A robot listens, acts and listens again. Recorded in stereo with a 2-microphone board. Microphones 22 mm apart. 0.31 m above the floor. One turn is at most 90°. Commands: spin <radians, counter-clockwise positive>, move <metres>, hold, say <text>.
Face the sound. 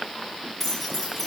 spin 0.52
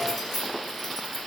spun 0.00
spin 0.52
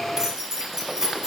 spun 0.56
spin -0.44
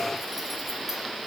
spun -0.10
spin -0.26
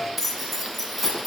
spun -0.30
say Found it: keys jangling, straight ahead, 1 to 2 m away.